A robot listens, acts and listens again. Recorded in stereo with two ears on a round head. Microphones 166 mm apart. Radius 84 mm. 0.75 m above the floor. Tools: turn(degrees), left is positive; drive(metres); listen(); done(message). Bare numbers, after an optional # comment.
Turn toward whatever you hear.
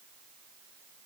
listen()
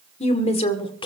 # The woman speaking: about 30° left or 150° left.
turn(30)
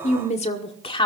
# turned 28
# The woman speaking: about 30° left or 150° left.
turn(30)
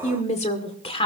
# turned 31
# The woman speaking: about 30° left or 150° left.
turn(30)
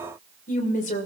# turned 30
# So it is at 135° left.
turn(135)
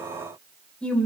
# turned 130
done("Facing the woman speaking, 2 to 4 m away.")